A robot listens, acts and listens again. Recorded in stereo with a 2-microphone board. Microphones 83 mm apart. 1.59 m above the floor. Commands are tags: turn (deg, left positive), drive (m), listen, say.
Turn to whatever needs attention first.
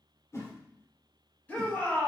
<turn deg="20"/>
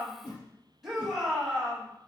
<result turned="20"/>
<say>Found it: a shout, straight ahead, 2 to 4 m away.</say>